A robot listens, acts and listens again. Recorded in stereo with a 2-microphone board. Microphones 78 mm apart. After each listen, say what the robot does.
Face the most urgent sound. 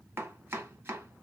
Keep listening.
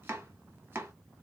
Keep listening.
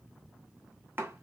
I can't make out anything urgent, only chopping.